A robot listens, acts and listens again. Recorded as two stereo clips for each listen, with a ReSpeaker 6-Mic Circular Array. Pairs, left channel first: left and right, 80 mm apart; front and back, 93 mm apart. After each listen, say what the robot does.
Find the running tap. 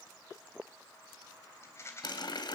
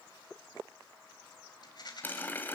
Turn 70° left.
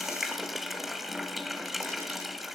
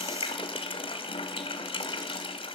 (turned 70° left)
Facing the running tap, 2 to 4 m away.